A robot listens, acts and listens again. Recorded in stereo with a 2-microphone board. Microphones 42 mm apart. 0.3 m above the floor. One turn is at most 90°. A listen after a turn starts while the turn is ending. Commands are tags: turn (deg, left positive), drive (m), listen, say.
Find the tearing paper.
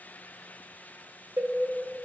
<listen/>
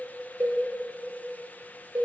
<listen/>
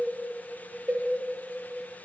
<say>I can't make out tearing paper to turn to.</say>